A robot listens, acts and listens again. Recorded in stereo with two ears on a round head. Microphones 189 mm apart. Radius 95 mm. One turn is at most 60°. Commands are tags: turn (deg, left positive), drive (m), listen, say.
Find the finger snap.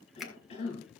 <turn deg="30"/>
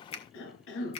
<turn deg="60"/>
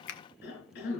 <turn deg="60"/>
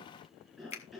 <turn deg="35"/>
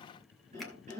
<listen/>
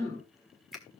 <say>Facing the finger snap.</say>